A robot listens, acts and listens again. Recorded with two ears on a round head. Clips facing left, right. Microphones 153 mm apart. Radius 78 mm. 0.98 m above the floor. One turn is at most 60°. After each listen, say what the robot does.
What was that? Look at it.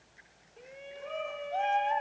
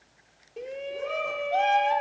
Turn 60° right.
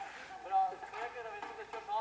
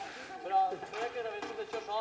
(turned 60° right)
Turn 45° right.
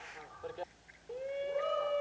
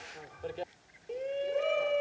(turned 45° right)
Turn 25° right.
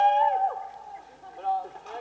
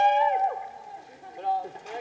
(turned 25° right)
Turn 20° right.
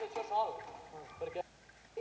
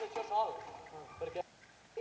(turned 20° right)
Found it: a shout, straight ahead.